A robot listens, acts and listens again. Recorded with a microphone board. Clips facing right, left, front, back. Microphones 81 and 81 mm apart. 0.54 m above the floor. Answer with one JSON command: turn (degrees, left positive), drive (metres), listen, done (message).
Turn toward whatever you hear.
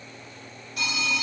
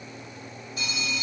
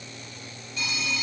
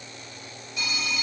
{"turn": -100}
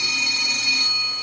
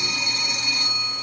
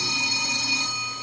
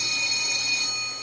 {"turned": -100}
{"turn": 15}
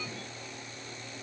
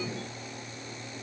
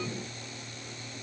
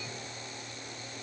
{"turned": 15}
{"listen": true}
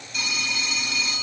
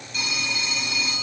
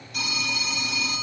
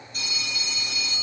{"done": "Facing the phone ringing."}